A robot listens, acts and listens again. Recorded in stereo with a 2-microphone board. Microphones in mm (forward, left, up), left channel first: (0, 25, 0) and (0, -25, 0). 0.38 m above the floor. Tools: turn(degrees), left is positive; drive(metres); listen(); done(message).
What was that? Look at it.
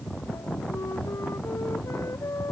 turn(degrees=90)
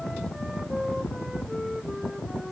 turn(degrees=-10)
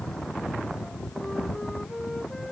done("Facing the flute.")